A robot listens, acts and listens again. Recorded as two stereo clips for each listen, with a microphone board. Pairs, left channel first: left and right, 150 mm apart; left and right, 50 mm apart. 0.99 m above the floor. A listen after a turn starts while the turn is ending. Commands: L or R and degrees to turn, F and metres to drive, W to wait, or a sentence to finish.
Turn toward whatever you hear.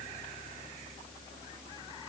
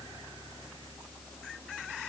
W
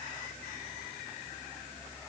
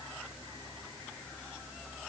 W
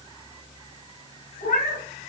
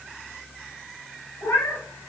L70
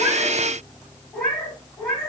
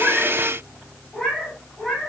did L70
L10
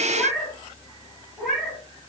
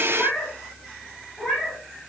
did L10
Facing the cat meowing, 2 to 4 m away.